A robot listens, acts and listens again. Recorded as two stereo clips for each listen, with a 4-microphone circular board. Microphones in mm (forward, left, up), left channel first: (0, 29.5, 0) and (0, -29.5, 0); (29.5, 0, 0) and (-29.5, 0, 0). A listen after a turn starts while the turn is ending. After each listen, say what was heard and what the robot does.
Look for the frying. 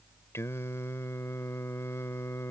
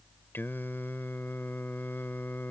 Keep listening.
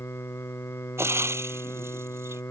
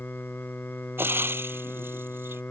The frying: 130° right. Turn 130° right.
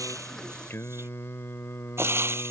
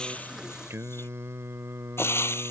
The frying is now 45° right. Turn 45° right.
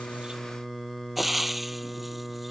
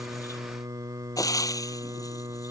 Found it: frying, straight ahead.